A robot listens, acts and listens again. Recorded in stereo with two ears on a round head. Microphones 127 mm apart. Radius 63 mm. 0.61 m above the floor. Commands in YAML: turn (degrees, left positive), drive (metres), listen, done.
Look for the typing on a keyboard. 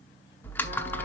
turn: 30
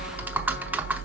turn: -15
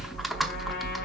done: "Facing the typing on a keyboard, under 1 m away."